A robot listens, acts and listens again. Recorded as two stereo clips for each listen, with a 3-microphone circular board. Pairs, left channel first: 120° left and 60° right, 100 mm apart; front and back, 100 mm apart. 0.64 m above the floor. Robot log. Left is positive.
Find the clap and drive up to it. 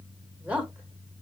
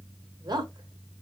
cmd idle
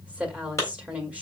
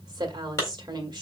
note: The clap: 55° left.
cmd yaw +55
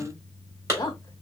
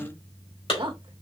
cmd fwd 1.0
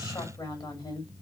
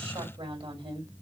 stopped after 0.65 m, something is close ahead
cmd idle
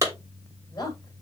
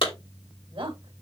end: Blocked. The clap is further on, straight ahead.